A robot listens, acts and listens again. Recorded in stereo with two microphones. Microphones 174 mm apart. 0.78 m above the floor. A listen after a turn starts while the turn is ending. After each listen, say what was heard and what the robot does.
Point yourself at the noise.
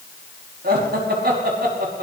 The laughter: about 65° right or 115° right. Turn 65° right.
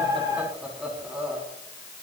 Facing the laughter, over 4 m away.